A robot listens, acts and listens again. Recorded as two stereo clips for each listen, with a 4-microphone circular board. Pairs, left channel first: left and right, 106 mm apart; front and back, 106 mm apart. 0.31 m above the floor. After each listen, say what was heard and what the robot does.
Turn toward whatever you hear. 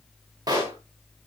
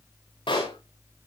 The pop: 35° right. Turn 35° right.
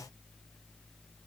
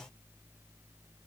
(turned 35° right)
I heard a pop from this way, but can't make it out now.